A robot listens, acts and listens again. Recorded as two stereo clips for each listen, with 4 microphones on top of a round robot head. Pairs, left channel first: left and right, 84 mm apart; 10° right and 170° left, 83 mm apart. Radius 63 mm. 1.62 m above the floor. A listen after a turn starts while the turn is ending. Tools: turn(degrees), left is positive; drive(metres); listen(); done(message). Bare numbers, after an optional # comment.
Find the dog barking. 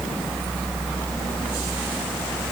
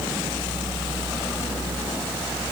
listen()
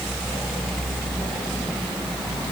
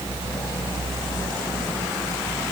listen()
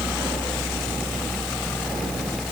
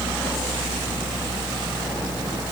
done("I can't make out a dog barking to turn to.")